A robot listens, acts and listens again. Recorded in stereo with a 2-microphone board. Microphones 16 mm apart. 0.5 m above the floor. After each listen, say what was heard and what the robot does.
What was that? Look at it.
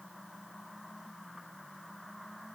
Keep listening.
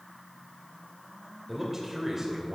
The man speaking: about 15° right or 165° right. Turn 15° right.
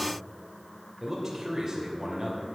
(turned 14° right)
So it is at 150° right. Turn 150° right.
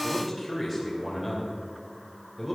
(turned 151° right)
Found it: a man speaking, straight ahead.